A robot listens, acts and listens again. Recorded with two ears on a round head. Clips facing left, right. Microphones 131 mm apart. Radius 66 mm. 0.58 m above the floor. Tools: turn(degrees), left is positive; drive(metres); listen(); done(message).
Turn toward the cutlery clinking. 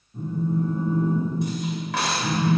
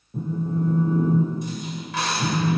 turn(degrees=50)
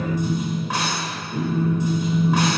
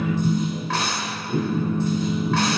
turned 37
turn(degrees=15)
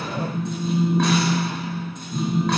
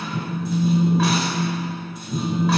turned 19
listen()
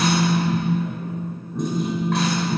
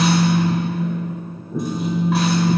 listen()
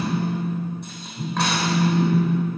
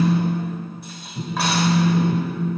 done("Facing where the cutlery clinking came from. I can't hear it now.")